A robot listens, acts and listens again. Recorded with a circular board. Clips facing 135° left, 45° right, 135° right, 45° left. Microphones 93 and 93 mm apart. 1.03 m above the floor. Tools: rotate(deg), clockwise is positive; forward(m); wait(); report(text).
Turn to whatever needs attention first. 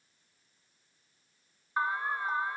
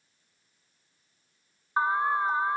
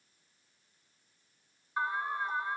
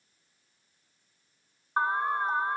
rotate(-15)
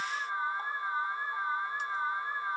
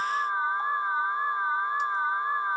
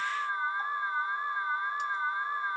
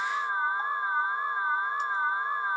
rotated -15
report("Found it: an alarm, straight ahead.")